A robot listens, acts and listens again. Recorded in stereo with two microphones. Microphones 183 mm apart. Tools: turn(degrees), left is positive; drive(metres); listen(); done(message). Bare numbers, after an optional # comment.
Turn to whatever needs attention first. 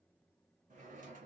listen()
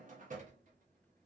listen()
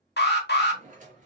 # The alarm: about 60° left or 120° left.
turn(60)
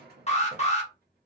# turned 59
# So it is at 40° left.
turn(40)
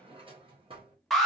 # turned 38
done("Facing the alarm, under 1 m away.")